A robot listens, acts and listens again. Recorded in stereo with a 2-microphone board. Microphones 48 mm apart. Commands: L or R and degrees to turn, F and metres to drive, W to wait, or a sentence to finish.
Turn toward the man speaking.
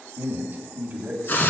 R40
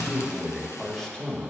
L10
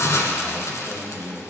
L10
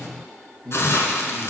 Found it: a man speaking, straight ahead.